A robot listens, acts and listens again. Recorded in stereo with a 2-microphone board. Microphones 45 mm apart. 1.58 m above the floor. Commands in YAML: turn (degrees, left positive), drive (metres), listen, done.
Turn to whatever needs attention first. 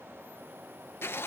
listen: true
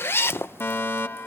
turn: 60
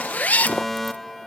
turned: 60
done: "Facing the fire alarm."